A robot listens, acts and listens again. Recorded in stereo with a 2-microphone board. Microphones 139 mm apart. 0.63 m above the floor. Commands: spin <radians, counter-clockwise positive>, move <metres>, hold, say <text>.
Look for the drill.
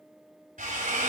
spin -1.57
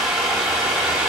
say Found it: a drill, straight ahead.